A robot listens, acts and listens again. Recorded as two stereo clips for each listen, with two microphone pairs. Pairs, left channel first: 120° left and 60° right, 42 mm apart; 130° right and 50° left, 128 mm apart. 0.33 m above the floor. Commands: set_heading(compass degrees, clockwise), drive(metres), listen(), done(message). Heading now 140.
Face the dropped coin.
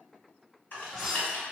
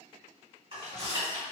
set_heading(110)
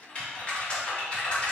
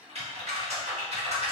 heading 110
done("I heard a dropped coin from this way, but can't make it out now.")